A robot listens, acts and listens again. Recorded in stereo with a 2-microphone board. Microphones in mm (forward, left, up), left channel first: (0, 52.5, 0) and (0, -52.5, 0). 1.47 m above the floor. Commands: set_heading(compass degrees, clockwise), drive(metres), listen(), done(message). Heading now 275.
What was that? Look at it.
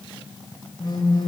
set_heading(235)
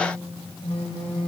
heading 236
set_heading(136)
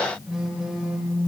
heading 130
done("Found it: a phone buzzing, straight ahead.")